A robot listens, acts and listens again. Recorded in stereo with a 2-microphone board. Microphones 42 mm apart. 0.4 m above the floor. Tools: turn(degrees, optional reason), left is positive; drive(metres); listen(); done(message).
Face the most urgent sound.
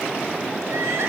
listen()
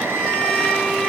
turn(degrees=-70, reason="The crying: about 70° right or 110° right.")
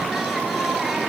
listen()
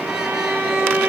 listen()
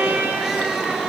done("I heard crying, but can't make it out now. It was about straight ahead or 40° right.")